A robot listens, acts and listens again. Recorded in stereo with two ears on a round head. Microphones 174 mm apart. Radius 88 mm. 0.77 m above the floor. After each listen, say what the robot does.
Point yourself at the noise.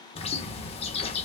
Turn 35° left.
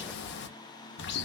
Turn 110° left.
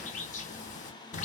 Turn 40° left.
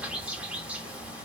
Facing the bird.